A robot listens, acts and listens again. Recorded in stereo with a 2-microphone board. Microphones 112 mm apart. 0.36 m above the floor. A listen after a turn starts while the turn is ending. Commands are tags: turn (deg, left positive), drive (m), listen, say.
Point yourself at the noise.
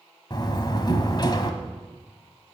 <turn deg="40"/>
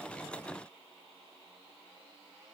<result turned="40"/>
<listen/>
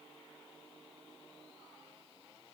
<say>I heard a door slam, but can't make it out now. It was about straight ahead or 100° left.</say>